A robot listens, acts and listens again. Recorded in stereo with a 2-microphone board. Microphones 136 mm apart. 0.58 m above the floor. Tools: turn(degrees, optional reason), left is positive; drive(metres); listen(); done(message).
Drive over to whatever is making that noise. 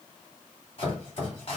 turn(degrees=45, reason="The chopping: about 45° left or 135° left.")
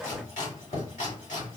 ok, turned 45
turn(degrees=95, reason="So it is at 95° left.")
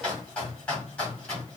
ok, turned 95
turn(degrees=10, reason="The chopping is now 10° left.")
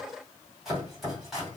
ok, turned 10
drive(metres=1.0)
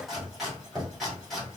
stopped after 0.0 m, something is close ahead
done("Blocked. The chopping is further on, straight ahead.")